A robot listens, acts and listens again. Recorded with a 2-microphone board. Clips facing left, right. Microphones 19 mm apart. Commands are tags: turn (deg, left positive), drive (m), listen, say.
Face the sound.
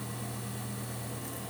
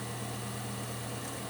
<listen/>
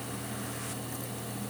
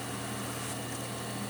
<listen/>
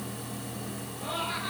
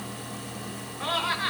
<turn deg="-50"/>
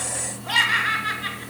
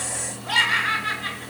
<say>Found it: laughter, straight ahead.</say>